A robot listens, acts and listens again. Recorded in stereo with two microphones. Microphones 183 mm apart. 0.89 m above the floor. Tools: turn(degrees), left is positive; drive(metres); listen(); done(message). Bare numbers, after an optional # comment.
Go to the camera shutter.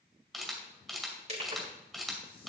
turn(30)
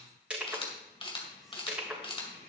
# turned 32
# So it is at 150° left.
turn(150)
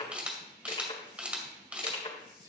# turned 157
drive(1.0)
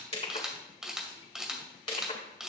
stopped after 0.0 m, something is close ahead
done("Something is in my way. I am facing the camera shutter but have not reached it.")